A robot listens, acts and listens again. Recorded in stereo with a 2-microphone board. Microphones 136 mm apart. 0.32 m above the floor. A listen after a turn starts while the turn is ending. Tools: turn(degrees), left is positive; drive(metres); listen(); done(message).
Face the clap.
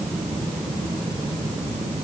listen()
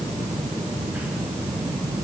listen()
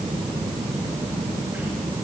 done("I can't make out a clap to turn to.")